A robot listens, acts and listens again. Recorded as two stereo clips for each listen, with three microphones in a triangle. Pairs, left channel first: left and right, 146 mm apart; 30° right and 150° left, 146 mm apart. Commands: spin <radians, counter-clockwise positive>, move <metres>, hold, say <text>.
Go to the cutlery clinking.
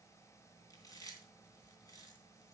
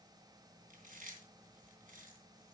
hold
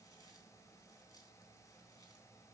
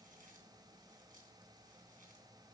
hold
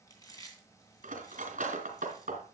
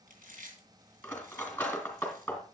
spin -1.92
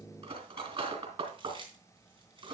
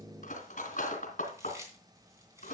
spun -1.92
spin -0.79
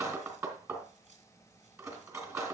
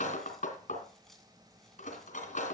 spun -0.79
spin -0.35
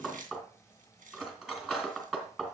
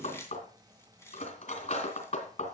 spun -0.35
move 1.0
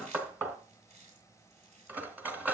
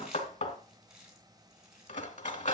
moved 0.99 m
spin -0.26
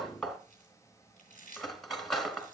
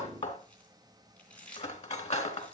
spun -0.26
move 1.0
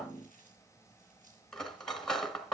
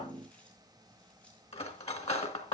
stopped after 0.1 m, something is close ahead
say Arrived at the cutlery clinking, straight ahead.